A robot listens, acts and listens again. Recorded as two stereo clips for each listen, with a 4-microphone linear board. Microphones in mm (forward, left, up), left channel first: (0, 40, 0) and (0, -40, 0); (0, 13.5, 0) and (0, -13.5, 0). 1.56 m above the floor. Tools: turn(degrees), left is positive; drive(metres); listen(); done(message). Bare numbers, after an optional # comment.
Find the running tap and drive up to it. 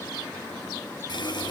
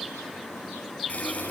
# The running tap: about 65° left or 115° left.
turn(65)
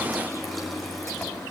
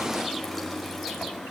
drive(1.0)
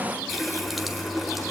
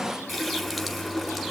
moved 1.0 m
drive(1.0)
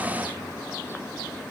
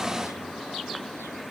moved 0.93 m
listen()
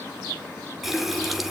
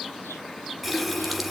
drive(1.0)
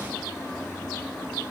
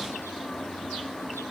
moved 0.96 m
drive(1.0)
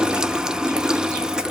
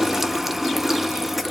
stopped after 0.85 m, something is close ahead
# The running tap is now 10° right.
turn(-10)
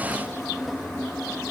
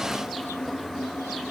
done("I am next to the running tap.")